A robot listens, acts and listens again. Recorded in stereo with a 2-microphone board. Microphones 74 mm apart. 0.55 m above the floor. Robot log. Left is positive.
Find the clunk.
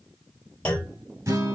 note: The clunk: about 20° left or 160° left.
cmd yaw +20
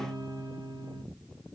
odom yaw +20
cmd idle
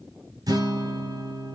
end: I heard a clunk, but can't make it out now. It was about straight ahead or 140° left.